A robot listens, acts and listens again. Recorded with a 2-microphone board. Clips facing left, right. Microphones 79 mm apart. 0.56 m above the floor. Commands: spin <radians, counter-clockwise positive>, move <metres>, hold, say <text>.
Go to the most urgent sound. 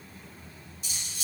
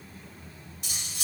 hold
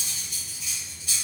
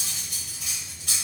hold
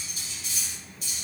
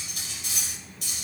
say I can't make out anything urgent to turn to.